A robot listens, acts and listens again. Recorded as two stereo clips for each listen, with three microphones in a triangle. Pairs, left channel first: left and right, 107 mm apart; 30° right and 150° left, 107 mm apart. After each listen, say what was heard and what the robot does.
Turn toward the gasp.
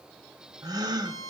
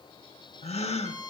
The gasp: 35° right. Turn 35° right.
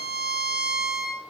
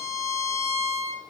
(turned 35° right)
I heard a gasp from this way, but can't make it out now.